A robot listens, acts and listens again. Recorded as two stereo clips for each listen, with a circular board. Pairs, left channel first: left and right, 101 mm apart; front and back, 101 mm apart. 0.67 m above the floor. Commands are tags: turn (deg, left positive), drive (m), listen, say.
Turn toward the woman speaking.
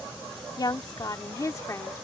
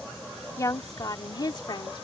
<turn deg="35"/>
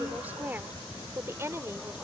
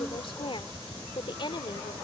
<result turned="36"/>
<turn deg="-30"/>
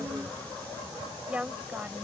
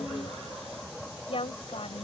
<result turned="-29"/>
<turn deg="-15"/>
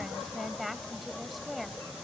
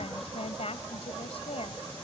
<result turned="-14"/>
<say>Facing the woman speaking.</say>